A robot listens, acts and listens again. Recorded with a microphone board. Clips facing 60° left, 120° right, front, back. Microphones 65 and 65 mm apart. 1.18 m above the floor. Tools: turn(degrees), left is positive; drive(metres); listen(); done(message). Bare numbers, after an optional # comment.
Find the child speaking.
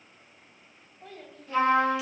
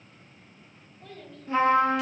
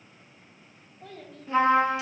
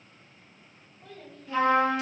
done("Facing the child speaking.")